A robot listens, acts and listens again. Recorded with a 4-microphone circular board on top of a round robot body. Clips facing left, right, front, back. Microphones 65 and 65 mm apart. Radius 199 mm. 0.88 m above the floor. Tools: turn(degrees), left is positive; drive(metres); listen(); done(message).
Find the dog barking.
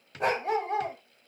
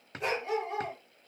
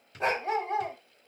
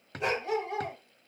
turn(degrees=50)
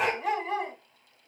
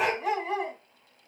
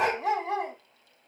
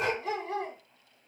done("Found it: a dog barking, straight ahead.")